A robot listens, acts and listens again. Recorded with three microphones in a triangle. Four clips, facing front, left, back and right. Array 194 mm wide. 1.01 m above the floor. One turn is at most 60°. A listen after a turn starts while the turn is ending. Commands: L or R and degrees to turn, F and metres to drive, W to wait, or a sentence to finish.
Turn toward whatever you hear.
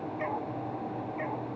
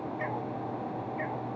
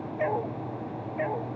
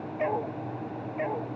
R60
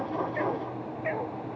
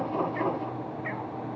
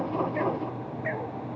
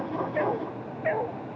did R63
R60
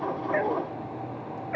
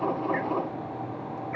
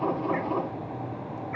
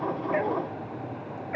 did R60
R30
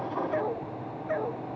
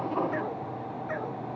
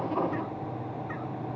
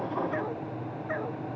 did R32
Found it: a dog barking, straight ahead.